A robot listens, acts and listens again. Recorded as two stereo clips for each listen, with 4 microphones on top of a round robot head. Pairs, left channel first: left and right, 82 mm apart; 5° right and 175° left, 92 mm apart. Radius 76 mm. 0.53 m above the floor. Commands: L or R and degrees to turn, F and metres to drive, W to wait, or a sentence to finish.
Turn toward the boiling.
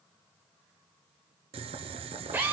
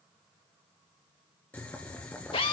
R85
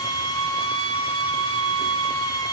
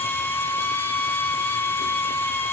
W
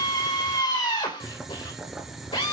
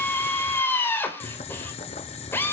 Found it: boiling, straight ahead, 1 to 2 m away.